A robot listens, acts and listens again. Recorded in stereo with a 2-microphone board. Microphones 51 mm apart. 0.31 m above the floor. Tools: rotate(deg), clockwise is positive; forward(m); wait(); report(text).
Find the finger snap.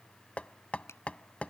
rotate(-60)
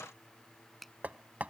report("Found it: a finger snap, straight ahead.")